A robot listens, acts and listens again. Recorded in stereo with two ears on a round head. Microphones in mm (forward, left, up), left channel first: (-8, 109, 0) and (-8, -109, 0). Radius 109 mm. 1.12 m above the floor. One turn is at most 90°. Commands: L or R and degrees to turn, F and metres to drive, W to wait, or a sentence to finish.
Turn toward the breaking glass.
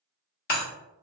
L40
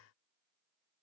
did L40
W
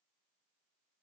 I heard breaking glass, but can't make it out now. It was about straight ahead or 100° left.